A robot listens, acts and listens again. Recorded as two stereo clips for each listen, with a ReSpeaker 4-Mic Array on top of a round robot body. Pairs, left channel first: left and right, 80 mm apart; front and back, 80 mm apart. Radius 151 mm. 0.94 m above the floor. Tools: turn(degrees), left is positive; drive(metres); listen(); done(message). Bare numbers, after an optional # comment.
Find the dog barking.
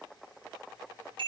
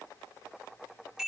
listen()
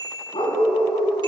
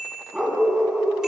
# The dog barking: 90° left.
turn(90)
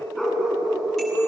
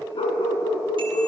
done("Found it: a dog barking, straight ahead.")